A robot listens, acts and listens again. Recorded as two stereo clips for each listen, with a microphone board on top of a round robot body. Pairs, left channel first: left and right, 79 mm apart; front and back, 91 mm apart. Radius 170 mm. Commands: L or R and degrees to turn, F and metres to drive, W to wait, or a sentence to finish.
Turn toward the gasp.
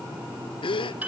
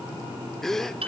L85
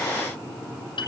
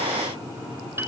I heard a gasp from this way, but can't make it out now.